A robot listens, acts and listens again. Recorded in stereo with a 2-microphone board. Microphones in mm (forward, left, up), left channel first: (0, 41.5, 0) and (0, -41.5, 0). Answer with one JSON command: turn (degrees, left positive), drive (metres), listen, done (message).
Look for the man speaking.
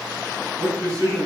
{"turn": -50}
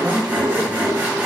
{"turn": -65}
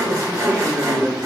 {"turn": -40}
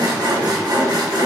{"listen": true}
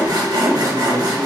{"listen": true}
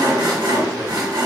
{"done": "I heard a man speaking from this way, but can't make it out now."}